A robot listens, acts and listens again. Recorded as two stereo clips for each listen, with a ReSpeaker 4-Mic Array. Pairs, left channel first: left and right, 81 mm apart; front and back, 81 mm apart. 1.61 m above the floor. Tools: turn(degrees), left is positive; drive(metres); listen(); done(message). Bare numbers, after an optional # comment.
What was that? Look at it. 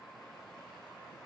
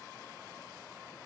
listen()
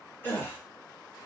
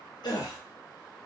# The gasp: 25° left.
turn(25)
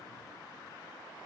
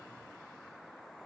done("I heard a gasp from this way, but can't make it out now.")